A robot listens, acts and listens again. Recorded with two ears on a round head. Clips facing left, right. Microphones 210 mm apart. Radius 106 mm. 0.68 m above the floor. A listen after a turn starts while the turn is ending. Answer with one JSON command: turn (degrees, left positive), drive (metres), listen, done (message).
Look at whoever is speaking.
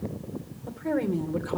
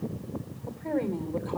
{"turn": 15}
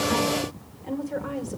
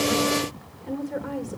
{"done": "Found it: a woman speaking, straight ahead."}